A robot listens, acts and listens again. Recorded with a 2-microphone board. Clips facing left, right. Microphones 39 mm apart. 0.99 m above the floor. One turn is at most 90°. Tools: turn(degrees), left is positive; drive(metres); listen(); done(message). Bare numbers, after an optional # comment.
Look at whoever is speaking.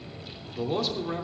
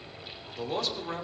turn(30)
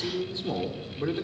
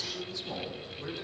# So it is at 145° left.
turn(90)
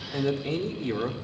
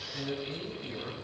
# The man speaking is now 90° left.
turn(90)
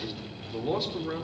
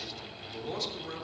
# The man speaking is now 20° left.
turn(20)
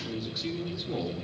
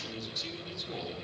# The man speaking is now 10° left.
turn(10)
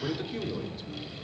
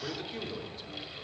done("Facing the man speaking.")